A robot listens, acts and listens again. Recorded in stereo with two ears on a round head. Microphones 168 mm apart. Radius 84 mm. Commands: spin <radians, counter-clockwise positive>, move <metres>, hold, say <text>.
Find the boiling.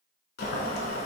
spin 0.96
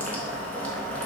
spin 0.17
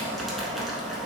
say Facing the boiling.